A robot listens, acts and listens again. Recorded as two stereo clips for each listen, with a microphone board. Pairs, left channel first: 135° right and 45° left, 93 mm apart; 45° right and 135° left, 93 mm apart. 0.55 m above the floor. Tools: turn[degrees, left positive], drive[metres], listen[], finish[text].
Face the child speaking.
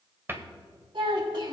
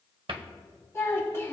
Thought: The child speaking: 20° left.
Action: turn[20]
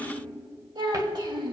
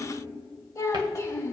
Thought: The child speaking is now 10° left.
Action: turn[10]
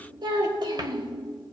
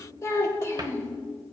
Thought: The child speaking is now 15° left.
Action: turn[15]
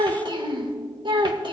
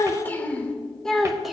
Thought: The child speaking is now 50° left.
Action: turn[50]
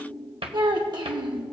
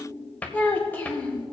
Thought: The child speaking is now 25° left.
Action: turn[25]
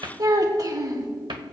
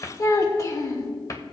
Action: finish[Found it: a child speaking, straight ahead.]